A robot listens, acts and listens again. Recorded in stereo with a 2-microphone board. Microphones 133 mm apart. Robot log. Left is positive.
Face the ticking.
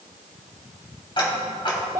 note: The ticking: about 40° left or 140° left.
cmd yaw +40
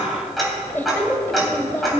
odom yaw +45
end: Found it: ticking, straight ahead.